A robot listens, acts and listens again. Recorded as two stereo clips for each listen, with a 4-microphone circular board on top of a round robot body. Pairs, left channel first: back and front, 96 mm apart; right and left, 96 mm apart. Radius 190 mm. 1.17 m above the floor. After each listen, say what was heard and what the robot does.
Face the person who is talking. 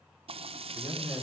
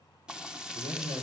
The man speaking: 115° left. Turn 115° left.
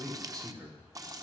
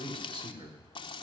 The man speaking is now 50° left. Turn 50° left.
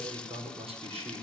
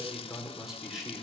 Facing the man speaking, over 4 m away.